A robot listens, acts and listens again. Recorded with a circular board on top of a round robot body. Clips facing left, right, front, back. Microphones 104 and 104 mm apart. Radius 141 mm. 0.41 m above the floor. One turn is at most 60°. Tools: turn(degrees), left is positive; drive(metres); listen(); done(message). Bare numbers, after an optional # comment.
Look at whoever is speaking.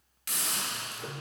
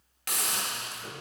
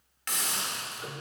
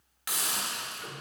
listen()
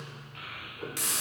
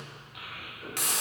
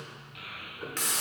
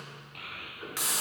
# The child speaking: 170° right.
turn(-60)
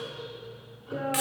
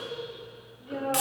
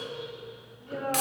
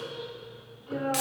# The child speaking is now 100° right.
turn(-60)
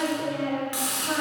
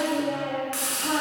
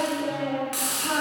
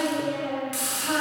# The child speaking is now 50° right.
turn(-50)
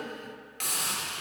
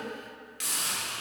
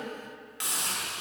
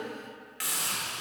listen()
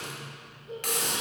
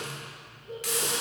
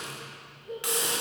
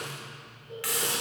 done("Found it: a child speaking, straight ahead.")